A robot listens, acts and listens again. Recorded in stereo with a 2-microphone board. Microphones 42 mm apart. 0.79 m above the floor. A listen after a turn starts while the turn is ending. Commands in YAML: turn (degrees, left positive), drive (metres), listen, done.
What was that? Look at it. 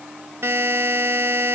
turn: -70
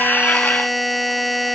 done: "Facing the buzzer."